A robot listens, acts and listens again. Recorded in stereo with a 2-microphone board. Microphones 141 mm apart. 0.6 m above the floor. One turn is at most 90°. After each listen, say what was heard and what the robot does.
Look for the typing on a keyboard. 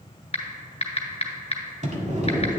The typing on a keyboard: about 45° left or 135° left. Turn 45° left.
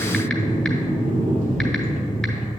Keep listening.
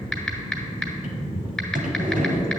Found it: typing on a keyboard, straight ahead, 1 to 2 m away.